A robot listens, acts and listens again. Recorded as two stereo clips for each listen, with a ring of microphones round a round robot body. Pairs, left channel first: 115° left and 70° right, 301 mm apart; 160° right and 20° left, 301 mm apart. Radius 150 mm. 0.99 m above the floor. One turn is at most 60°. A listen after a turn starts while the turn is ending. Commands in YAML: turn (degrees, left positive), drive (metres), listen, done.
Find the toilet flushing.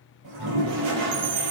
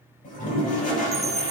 turn: -60
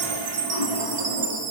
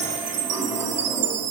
turn: -60
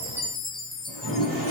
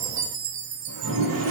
turn: -20
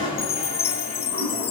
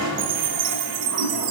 done: "Found it: a toilet flushing, straight ahead."